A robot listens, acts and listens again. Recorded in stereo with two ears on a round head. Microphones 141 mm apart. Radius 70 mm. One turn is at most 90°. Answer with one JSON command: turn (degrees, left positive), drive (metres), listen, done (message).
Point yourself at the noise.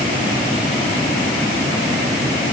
{"listen": true}
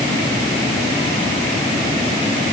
{"listen": true}
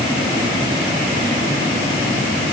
{"done": "I can't make out anything to turn to."}